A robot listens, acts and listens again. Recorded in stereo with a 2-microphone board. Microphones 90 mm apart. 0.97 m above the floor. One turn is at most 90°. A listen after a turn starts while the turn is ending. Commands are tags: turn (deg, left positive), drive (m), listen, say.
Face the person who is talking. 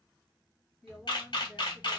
<turn deg="-30"/>
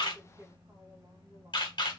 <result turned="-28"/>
<turn deg="-90"/>
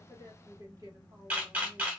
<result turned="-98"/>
<turn deg="-45"/>
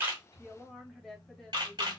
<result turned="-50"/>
<say>Facing the woman speaking.</say>